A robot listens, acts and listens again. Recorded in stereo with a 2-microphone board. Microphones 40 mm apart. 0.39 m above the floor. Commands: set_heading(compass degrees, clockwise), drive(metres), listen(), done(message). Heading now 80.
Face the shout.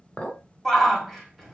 set_heading(50)
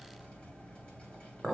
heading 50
listen()
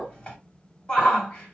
set_heading(260)
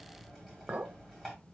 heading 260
listen()
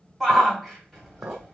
done("Found it: a shout, straight ahead, 2 to 4 m away.")